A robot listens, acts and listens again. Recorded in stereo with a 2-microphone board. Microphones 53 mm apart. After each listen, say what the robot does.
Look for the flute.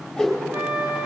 Turn 35° right.
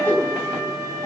Turn 110° right.
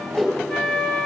Turn 15° left.
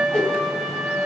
Found it: a flute, straight ahead, 1 to 2 m away.